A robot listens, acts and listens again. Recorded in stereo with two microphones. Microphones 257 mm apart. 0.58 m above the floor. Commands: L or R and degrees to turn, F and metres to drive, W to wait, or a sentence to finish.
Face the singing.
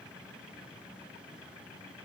W
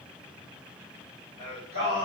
R40
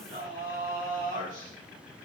R130
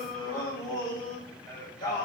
L15
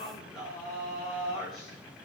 Found it: singing, straight ahead, 2 to 4 m away.